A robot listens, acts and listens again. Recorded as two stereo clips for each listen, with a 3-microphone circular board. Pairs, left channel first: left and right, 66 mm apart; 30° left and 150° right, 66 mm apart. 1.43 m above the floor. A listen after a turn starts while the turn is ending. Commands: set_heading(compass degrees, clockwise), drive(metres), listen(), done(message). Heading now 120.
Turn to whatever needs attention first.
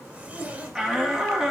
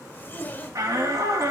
set_heading(290)
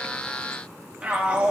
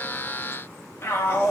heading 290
set_heading(310)
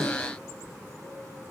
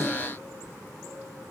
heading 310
listen()
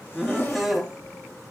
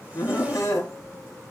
done("Facing the shout.")